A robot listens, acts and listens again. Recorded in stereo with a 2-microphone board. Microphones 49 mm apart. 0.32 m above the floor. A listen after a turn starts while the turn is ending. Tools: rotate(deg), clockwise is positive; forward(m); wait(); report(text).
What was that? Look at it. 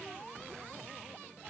wait()
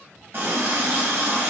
rotate(45)
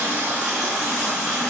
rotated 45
rotate(10)
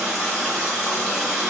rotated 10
report("Found it: a running tap, straight ahead, 1 to 2 m away.")